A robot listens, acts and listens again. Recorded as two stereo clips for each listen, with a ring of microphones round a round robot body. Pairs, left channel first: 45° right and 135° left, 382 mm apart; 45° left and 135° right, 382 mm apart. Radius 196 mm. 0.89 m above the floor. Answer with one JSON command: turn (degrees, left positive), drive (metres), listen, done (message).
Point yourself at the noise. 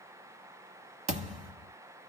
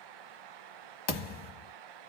{"turn": 60}
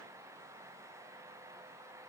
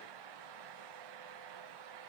{"done": "I heard a thud from this way, but can't make it out now."}